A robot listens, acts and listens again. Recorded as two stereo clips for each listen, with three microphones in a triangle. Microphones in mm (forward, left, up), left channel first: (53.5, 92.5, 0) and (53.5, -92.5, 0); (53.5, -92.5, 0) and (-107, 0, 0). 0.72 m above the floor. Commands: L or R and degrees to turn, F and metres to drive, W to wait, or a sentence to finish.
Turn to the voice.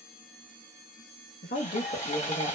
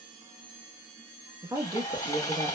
L90
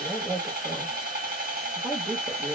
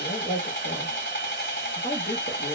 Found it: a woman speaking, straight ahead.